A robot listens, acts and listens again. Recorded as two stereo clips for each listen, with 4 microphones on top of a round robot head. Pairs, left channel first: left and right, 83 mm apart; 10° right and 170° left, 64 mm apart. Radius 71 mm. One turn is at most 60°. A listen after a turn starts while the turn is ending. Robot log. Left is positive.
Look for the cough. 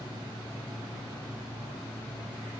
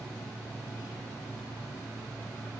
cmd idle
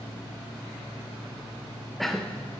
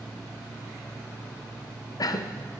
end: Found it: a cough, straight ahead.